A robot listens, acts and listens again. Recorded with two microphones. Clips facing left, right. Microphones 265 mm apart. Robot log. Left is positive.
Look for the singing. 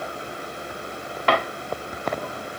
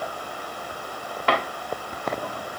cmd idle
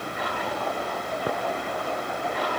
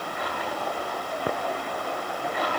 cmd idle
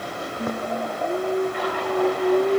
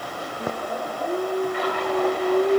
cmd yaw +30
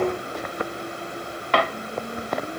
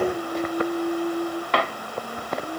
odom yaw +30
note: So it is at 30° right.
cmd yaw -30
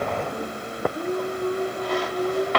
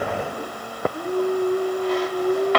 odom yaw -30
end: Facing the singing, over 4 m away.